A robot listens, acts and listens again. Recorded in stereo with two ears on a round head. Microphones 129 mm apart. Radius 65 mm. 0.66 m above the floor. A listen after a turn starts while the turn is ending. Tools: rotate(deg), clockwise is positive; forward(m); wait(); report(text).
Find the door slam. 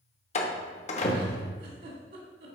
rotate(-50)
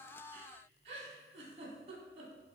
wait()
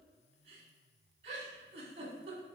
report("I heard a door slam, but can't make it out now. It was about straight ahead or 80° left.")